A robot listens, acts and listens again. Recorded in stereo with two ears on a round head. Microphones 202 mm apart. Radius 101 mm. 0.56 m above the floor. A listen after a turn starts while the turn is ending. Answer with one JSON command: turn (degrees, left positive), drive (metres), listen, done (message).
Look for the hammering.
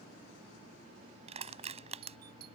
{"listen": true}
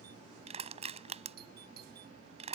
{"listen": true}
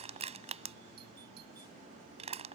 {"done": "I can't make out hammering to turn to."}